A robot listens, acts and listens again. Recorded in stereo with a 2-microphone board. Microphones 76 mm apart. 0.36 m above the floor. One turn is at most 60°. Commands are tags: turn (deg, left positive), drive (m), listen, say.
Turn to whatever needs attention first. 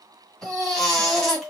<turn deg="30"/>
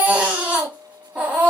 <turn deg="-20"/>
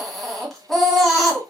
<say>Found it: a baby crying, straight ahead.</say>